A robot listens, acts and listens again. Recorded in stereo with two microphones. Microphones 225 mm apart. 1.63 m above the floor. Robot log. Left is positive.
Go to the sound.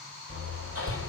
note: The hammering: about 75° right or 105° right.
cmd yaw -75
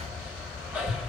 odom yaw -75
cmd fwd 1.0
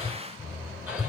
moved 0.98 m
cmd fwd 1.0
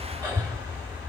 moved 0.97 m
note: The hammering is now 10° right.
cmd yaw -10
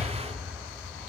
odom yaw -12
cmd fwd 1.0
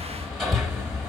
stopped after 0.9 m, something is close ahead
end: I am next to the hammering.